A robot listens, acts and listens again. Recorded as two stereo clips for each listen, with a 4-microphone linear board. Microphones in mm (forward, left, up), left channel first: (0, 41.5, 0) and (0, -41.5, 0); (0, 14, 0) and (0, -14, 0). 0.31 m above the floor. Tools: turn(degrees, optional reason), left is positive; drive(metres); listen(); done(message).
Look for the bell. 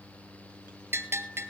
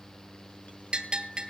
turn(degrees=-25, reason="The bell: about 25° right or 155° right.")
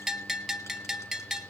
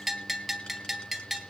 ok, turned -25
done("Facing the bell, 1 to 2 m away.")